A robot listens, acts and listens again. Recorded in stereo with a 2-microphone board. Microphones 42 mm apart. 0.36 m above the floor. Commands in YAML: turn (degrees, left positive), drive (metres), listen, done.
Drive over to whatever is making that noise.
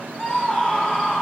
turn: 30
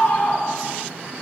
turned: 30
turn: 135
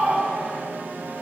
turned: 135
turn: -25
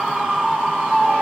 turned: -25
drive: 1.0
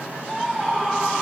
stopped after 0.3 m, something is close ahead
done: "Something is in my way. I am facing the scream but have not reached it."